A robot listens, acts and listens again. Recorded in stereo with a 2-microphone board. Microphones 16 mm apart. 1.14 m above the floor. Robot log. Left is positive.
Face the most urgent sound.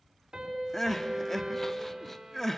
note: The crying: about 15° left or 165° left.
cmd yaw +15
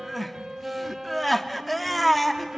end: Found it: crying, straight ahead, under 1 m away.